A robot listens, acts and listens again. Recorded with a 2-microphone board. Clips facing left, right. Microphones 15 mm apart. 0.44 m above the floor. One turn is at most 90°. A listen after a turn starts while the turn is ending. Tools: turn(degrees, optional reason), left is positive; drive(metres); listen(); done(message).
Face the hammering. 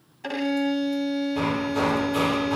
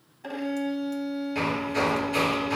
turn(degrees=-60, reason="The hammering: about 60° right or 120° right.")
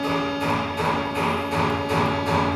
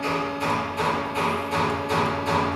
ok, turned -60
done("Found it: hammering, straight ahead, 2 to 4 m away.")